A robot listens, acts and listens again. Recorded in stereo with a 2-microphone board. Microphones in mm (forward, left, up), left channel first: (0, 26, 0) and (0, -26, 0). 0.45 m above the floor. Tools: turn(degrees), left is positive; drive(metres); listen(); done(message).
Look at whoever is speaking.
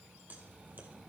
listen()
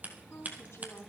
turn(degrees=60)
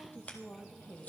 turn(degrees=50)
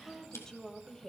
turn(degrees=15)
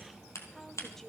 turn(degrees=10)
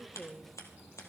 done("Found it: a woman speaking, straight ahead, 1 to 2 m away.")